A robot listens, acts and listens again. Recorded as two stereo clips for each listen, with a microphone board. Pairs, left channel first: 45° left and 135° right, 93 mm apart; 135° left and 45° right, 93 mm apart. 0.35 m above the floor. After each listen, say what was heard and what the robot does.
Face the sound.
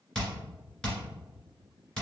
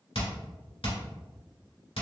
The hammering: 125° left. Turn 125° left.
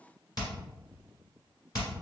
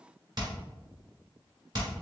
Found it: hammering, straight ahead.